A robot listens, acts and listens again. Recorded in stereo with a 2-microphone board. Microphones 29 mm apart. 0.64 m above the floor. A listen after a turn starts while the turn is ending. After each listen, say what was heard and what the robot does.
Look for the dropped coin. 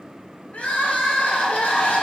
Keep listening.
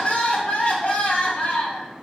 Keep listening.
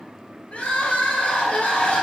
I can't make out a dropped coin to turn to.